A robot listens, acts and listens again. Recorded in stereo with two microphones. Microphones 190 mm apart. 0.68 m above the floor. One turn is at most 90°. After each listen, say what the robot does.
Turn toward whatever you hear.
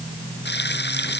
Turn 60° left.
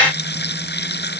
Turn 60° left.
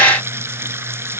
Turn 10° right.
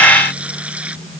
Found it: frying, straight ahead.